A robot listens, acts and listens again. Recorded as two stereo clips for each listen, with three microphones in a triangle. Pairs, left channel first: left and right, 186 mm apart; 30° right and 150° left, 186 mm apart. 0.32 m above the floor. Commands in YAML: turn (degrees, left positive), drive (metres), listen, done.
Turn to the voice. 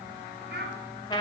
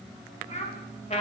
turn: -80
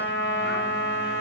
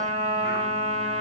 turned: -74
listen: true
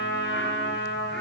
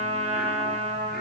listen: true
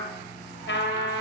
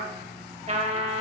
done: "I heard a child speaking from this way, but can't make it out now."